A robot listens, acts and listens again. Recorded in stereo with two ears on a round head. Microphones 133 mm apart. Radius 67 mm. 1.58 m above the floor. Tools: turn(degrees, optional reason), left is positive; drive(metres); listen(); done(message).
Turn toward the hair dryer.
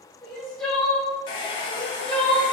turn(degrees=35, reason="The hair dryer: about 35° left or 145° left.")
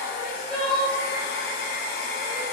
turn(degrees=110, reason="So it is at 110° left.")
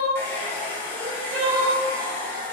turn(degrees=10, reason="The hair dryer is now 10° left.")
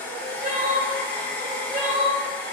turn(degrees=10, reason="The hair dryer is now 10° left.")
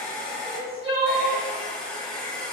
done("Facing the hair dryer.")